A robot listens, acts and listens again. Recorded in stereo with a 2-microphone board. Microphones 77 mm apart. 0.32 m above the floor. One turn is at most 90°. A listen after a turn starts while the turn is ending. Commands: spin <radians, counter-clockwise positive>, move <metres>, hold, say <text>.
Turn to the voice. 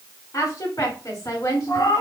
spin 0.96
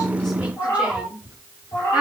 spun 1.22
spin -0.17
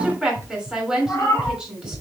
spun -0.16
say Found it: a woman speaking, straight ahead, 2 to 4 m away.